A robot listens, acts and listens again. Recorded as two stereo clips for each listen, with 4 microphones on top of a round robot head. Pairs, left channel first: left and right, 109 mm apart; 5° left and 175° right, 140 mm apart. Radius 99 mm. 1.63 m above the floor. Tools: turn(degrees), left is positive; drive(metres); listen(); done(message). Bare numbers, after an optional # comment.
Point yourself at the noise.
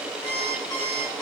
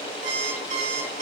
# The alarm clock: 155° left.
turn(155)
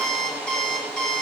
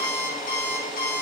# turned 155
# The alarm clock is now 10° left.
turn(10)
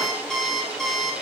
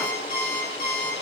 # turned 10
done("Found it: an alarm clock, straight ahead.")